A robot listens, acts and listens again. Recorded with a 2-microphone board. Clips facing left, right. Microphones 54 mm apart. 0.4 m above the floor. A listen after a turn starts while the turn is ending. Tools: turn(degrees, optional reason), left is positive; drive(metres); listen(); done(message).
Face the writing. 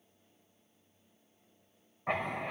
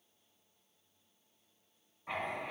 turn(degrees=55, reason="The writing: about 55° left or 125° left.")
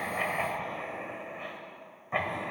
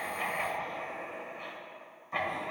turn(degrees=30, reason="So it is at 30° left.")
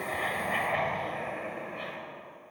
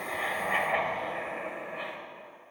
turn(degrees=-10, reason="The writing is now 10° right.")
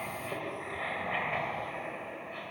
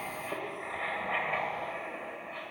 done("Facing the writing.")